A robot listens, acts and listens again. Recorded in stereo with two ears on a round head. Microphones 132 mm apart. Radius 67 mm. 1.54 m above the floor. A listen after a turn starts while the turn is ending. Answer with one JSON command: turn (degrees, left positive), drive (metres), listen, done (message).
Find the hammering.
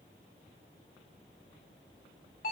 {"listen": true}
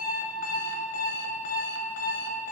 {"listen": true}
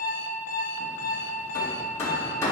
{"turn": 15}
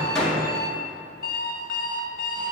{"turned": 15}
{"done": "Facing the hammering, 1 to 2 m away."}